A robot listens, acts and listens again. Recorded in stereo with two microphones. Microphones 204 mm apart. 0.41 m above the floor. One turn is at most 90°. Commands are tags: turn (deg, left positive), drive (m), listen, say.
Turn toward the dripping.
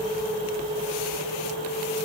<listen/>
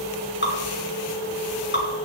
<turn deg="65"/>
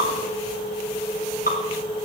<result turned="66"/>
<turn deg="45"/>
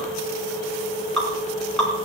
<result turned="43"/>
<say>Found it: dripping, straight ahead, over 4 m away.</say>